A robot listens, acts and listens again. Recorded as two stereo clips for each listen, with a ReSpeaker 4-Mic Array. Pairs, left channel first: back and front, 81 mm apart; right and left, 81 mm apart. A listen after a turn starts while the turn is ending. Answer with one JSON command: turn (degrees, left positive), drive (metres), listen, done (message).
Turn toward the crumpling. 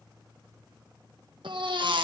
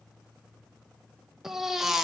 {"listen": true}
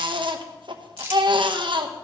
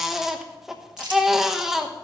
{"turn": 60}
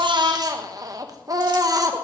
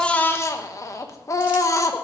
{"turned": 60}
{"listen": true}
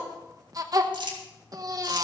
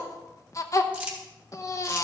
{"turn": 15}
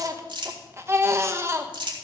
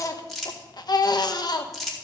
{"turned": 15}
{"done": "Facing the crumpling."}